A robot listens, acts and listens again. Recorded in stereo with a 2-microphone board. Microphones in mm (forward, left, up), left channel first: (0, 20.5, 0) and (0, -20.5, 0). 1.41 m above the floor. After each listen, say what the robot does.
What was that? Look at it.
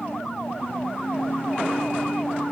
Keep listening.
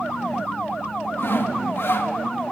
Turn 65° left.
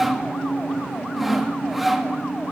Facing the sawing, 2 to 4 m away.